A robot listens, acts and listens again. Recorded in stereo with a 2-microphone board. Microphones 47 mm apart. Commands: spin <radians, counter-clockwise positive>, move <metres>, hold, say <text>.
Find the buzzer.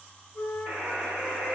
spin -1.05
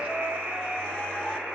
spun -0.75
spin -1.40
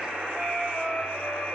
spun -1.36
say Facing the buzzer, 1 to 2 m away.